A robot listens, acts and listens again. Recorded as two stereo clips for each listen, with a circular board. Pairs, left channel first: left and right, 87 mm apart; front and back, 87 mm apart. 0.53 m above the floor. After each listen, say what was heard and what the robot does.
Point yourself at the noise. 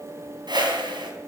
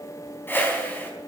The whoosh: 65° right. Turn 65° right.
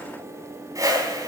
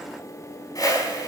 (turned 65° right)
The whoosh is now 40° right. Turn 40° right.
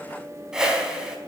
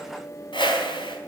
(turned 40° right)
The whoosh is now 10° right. Turn 10° right.
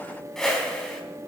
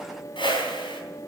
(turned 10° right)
Facing the whoosh.